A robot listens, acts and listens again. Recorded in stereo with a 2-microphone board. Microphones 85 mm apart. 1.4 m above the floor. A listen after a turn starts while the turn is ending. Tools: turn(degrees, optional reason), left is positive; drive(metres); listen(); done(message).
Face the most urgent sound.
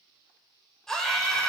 turn(degrees=30)
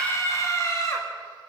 turn(degrees=145, reason="So it is at 145° left.")
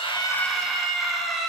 done("Found it: a scream, straight ahead, over 4 m away.")